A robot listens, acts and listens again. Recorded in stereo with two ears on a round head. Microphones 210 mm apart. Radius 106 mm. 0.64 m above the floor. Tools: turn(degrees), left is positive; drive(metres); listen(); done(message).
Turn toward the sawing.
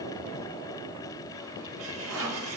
turn(degrees=-60)
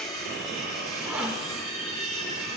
done("Facing the sawing, 1 to 2 m away.")